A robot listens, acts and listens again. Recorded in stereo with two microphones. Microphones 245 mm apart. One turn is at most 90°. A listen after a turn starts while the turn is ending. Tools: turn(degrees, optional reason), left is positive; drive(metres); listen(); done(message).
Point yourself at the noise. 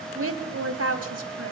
turn(degrees=-75, reason="The woman speaking: about 75° right or 105° right.")
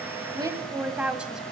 done("Found it: a woman speaking, straight ahead.")